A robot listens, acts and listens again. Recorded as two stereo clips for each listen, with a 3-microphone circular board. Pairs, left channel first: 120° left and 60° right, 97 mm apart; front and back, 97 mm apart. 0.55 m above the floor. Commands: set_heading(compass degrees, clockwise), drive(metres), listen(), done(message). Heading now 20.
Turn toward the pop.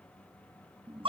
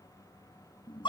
listen()
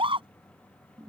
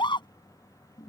listen()
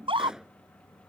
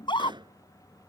set_heading(165)
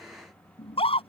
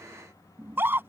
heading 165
done("Facing where the pop came from. I can't hear it now.")